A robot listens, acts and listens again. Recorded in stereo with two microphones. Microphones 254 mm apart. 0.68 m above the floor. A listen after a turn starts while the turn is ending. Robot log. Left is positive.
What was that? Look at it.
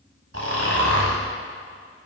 cmd yaw -90
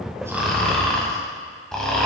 end: Found it: snoring, straight ahead.